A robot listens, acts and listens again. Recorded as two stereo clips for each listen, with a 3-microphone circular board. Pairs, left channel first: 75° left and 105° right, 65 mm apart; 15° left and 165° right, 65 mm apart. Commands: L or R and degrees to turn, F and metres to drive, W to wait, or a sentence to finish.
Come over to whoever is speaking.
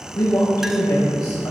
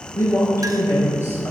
L60
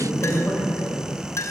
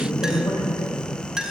F1.0
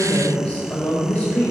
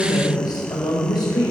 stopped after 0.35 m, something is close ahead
Something is in my way. I am facing the woman speaking but have not reached it.